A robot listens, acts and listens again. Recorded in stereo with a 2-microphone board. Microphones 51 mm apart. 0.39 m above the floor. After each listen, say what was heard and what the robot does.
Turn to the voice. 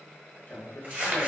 The man speaking: about 45° left or 135° left. Turn 45° left.
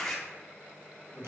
Keep listening.
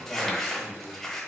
So it is at 80° left. Turn 80° left.
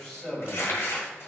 The man speaking is now 10° left. Turn 10° left.
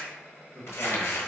Keep listening.
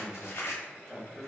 Found it: a man speaking, straight ahead, 1 to 2 m away.